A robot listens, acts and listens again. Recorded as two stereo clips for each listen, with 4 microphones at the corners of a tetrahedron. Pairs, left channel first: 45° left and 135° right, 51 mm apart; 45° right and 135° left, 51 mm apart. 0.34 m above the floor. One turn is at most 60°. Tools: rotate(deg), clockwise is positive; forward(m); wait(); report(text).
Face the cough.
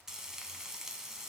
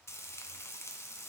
wait()
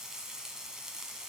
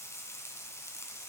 wait()
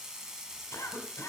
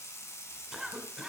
rotate(-45)
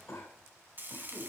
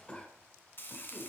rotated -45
rotate(-15)
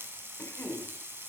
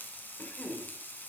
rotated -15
report("Found it: a cough, straight ahead.")